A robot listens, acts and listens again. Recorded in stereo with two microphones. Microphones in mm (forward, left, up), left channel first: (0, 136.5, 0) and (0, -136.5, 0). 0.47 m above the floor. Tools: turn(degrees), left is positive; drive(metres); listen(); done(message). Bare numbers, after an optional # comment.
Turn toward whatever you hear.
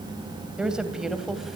turn(30)
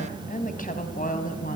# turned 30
# So it is at 150° left.
turn(150)
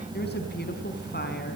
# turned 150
listen()
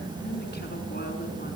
listen()
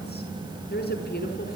# The woman speaking is now 35° left.
turn(35)
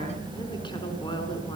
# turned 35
listen()
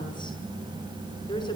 listen()
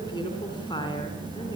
# The woman speaking is now 15° left.
turn(15)
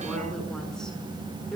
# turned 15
done("Facing the woman speaking.")